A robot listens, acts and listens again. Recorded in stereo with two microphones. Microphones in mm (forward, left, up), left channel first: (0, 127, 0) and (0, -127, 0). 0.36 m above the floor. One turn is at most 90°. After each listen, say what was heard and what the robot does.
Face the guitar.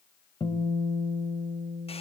The guitar: about 20° left or 160° left. Turn 20° left.
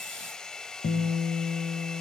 So it is at 135° left. Turn 90° left.
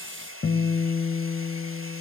The guitar is now 65° left. Turn 65° left.
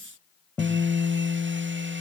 The guitar is now 10° left. Turn 10° left.
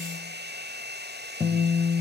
Facing the guitar.